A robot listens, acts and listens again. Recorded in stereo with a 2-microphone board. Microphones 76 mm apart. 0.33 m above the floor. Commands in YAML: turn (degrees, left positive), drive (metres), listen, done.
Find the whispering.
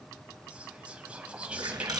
turn: -15
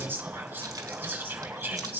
turn: -155
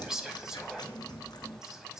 turn: -10
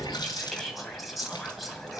done: "Found it: whispering, straight ahead, 2 to 4 m away."